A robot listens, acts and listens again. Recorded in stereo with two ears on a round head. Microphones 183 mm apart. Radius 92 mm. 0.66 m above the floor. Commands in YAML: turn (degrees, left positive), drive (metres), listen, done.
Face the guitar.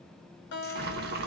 turn: 65
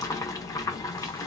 listen: true
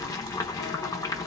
listen: true
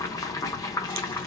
done: "I heard a guitar, but can't make it out now. It was about straight ahead or 50° left."